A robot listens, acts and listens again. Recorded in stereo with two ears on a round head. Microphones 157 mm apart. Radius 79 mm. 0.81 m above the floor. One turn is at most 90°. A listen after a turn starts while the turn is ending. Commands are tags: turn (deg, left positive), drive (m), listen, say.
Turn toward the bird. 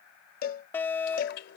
<turn deg="65"/>
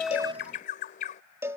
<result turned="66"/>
<turn deg="45"/>
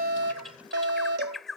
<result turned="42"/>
<say>Found it: a bird, straight ahead.</say>